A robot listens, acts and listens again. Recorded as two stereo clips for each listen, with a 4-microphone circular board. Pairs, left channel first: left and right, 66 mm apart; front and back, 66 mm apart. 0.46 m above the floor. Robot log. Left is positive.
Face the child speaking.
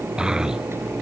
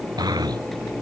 note: The child speaking: 170° right.
cmd yaw -170
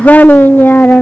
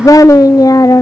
note: The child speaking is now 30° left.
cmd yaw +30
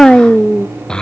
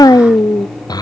note: The child speaking is now 15° left.
cmd yaw +15
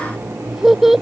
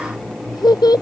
end: Found it: a child speaking, straight ahead.